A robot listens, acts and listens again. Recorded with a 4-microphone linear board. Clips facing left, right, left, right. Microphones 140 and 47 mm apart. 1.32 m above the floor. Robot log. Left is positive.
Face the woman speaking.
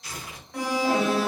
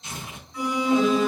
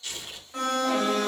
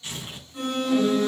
cmd idle
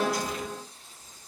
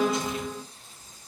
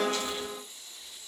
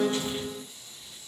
cmd idle
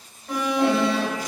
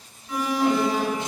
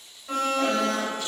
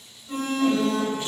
end: I can't make out a woman speaking to turn to.